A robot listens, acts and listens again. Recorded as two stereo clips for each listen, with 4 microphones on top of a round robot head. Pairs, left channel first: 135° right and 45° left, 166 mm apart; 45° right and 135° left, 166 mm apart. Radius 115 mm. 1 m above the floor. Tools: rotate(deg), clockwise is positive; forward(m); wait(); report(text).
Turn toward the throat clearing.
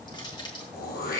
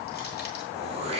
rotate(170)
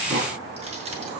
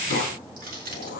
report("Facing the throat clearing.")